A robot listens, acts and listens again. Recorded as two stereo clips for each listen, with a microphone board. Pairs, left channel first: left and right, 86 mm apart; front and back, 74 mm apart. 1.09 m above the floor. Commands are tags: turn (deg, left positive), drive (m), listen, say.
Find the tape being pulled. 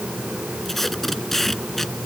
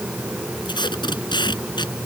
<say>Found it: tape being pulled, straight ahead.</say>